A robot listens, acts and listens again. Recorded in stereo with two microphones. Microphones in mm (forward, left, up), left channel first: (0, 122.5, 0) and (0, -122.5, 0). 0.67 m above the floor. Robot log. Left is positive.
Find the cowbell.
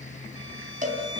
note: The cowbell: about 30° right or 150° right.
cmd yaw -30
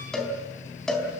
end: Found it: a cowbell, straight ahead, 2 to 4 m away.